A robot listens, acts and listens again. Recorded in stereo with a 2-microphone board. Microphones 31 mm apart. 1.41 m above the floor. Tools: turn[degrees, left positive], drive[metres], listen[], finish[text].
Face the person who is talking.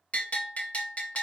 Action: listen[]
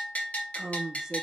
Thought: The woman speaking: about 20° right or 160° right.
Action: turn[-20]
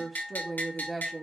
Action: finish[Facing the woman speaking, 1 to 2 m away.]